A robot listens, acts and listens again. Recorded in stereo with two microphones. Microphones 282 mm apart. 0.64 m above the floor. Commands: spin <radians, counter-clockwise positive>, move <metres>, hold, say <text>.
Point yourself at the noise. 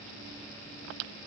hold
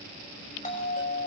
spin 0.44
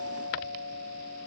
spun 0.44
spin 2.27
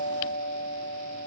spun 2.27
spin 0.70
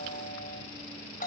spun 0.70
spin 0.61
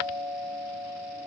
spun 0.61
say Found it: a doorbell, straight ahead, over 4 m away.